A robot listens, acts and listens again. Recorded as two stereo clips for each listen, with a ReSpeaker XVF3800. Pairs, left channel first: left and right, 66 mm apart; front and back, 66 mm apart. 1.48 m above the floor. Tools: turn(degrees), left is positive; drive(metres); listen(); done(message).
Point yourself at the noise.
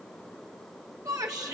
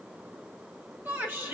turn(degrees=-120)
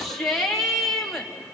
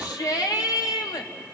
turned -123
done("Found it: a shout, straight ahead, 2 to 4 m away.")